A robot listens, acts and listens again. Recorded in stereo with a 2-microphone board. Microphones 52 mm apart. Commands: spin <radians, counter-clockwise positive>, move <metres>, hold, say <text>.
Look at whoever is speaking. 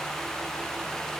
hold
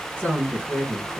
spin 0.70
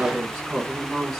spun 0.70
spin 0.17
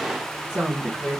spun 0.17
say Found it: a woman speaking, straight ahead, 1 to 2 m away.